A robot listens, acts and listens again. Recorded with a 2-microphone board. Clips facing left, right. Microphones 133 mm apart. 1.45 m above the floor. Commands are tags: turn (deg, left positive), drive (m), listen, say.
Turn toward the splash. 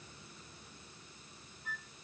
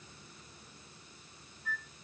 <listen/>
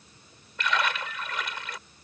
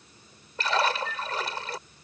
<turn deg="-35"/>
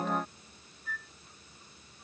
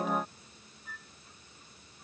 <listen/>
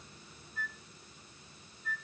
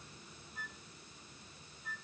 <say>I heard a splash, but can't make it out now. It was about straight ahead or 110° right.</say>